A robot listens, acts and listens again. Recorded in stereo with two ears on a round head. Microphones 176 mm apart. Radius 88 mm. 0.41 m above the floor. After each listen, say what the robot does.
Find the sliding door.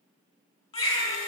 Keep listening.
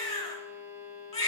Keep listening.
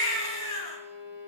I can't make out a sliding door, only a baby crying and a violin.